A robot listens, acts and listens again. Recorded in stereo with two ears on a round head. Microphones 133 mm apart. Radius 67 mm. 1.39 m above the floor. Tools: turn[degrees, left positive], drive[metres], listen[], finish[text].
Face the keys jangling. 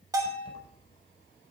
Thought: The keys jangling: about 30° left or 150° left.
Action: turn[30]
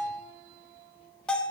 Action: listen[]
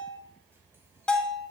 Action: listen[]
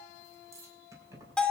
Thought: So it is at 20° right.
Action: turn[-20]
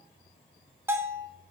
Action: listen[]
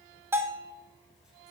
Action: listen[]
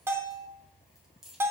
Action: finish[Facing the keys jangling, over 4 m away.]